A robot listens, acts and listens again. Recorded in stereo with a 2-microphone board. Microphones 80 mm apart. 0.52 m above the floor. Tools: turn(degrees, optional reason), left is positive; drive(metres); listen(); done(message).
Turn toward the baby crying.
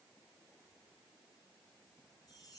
listen()
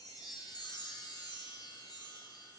listen()
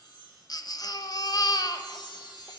turn(degrees=55, reason="The baby crying: about 55° left or 125° left.")
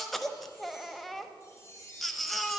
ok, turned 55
done("Found it: a baby crying, straight ahead, under 1 m away.")